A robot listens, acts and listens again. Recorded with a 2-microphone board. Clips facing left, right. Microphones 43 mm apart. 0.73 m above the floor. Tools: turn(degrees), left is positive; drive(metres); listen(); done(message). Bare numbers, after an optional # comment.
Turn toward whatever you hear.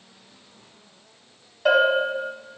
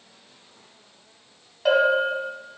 turn(30)
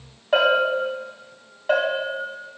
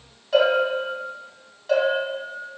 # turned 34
# So it is at 150° left.
turn(150)
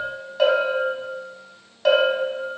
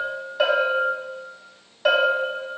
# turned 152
done("Facing the bell.")